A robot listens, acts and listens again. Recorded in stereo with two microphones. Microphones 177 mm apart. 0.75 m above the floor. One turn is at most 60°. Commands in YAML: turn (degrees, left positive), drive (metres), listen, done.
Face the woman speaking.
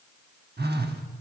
listen: true
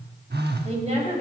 turn: -35
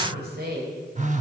turn: -60
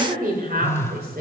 turn: -60
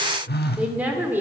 turn: -10
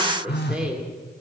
done: "Found it: a woman speaking, straight ahead."